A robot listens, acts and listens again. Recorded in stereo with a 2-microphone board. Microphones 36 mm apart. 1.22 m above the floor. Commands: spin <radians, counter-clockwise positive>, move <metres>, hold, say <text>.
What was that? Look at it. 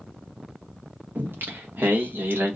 spin -1.57
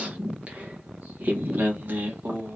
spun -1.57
spin -1.22
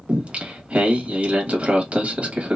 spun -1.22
spin -0.61
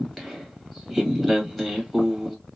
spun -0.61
say Found it: singing, straight ahead.